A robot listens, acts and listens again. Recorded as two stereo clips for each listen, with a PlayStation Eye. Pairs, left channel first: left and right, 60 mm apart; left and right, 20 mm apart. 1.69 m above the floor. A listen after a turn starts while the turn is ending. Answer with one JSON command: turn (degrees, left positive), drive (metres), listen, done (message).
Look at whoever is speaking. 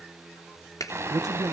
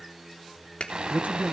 {"turn": -90}
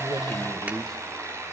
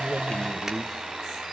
{"done": "Facing the man speaking."}